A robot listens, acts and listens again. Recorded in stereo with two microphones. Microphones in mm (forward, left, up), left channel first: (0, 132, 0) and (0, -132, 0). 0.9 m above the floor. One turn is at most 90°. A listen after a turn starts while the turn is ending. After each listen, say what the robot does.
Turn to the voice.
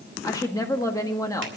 Turn 30° left.
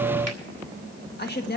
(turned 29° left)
Turn 90° left.
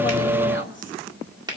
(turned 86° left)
Turn 50° left.
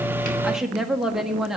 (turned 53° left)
Found it: a woman speaking, straight ahead.